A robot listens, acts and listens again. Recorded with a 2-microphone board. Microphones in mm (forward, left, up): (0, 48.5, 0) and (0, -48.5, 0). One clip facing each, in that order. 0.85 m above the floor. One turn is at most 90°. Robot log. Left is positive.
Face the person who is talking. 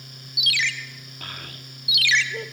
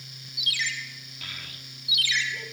note: The child speaking: about 50° left or 130° left.
cmd yaw +50
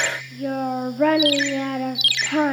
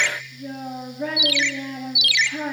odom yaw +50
note: So it is at 80° left.
cmd yaw +80
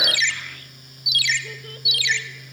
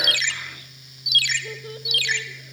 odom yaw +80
cmd idle
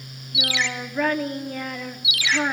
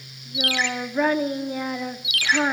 note: The child speaking is now 15° right.
cmd yaw -15
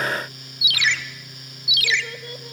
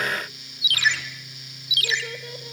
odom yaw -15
end: Facing the child speaking.